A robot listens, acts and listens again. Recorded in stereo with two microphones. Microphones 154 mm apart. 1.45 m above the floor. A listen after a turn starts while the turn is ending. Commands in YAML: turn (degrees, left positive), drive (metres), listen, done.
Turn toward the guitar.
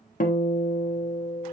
turn: 65
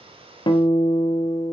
turn: 30
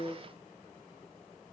listen: true
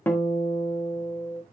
turn: 15
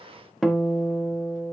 done: "Found it: a guitar, straight ahead."